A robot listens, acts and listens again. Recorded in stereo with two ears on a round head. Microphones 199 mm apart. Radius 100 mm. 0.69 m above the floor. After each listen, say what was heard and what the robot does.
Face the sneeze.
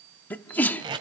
Turn 30° left.
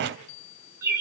Keep listening.
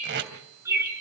I heard a sneeze, but can't make it out now. It was about 20° right or 140° left.